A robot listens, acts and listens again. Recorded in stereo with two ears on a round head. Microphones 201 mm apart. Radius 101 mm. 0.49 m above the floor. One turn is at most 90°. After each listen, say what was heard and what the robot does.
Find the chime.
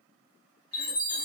The chime: about 35° left or 145° left. Turn 35° left.
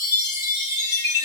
So it is at 105° left. Turn 90° left.
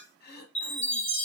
The chime is now 25° left. Turn 25° left.
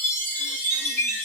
Found it: a chime, straight ahead, 1 to 2 m away.